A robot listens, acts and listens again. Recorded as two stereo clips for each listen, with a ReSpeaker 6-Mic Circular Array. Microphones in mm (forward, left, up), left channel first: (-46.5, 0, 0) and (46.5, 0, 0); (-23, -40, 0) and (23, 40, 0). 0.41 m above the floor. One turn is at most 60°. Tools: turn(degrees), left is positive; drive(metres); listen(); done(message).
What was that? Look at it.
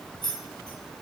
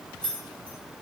turn(degrees=60)
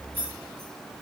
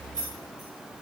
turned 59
turn(degrees=60)
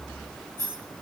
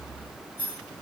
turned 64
turn(degrees=55)
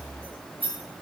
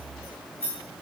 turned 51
done("Facing the keys jangling.")